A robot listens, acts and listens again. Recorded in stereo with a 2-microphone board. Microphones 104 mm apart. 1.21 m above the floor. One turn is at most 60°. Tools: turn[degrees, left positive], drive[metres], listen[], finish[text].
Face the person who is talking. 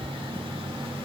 Action: listen[]
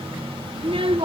Thought: The child speaking: about 60° right or 120° right.
Action: turn[-60]
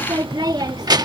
Thought: So it is at 45° right.
Action: turn[-45]
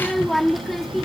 Action: finish[Found it: a child speaking, straight ahead.]